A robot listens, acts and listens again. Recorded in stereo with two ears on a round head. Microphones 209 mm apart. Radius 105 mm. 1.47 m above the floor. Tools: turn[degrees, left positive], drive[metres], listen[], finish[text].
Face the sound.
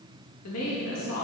Action: turn[90]
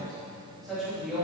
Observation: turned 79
Action: finish[Facing the woman speaking.]